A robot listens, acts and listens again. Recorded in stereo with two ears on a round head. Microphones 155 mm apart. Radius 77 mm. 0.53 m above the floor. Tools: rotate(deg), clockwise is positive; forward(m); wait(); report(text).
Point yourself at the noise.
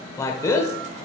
rotate(-20)
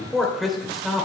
report("Found it: a man speaking, straight ahead.")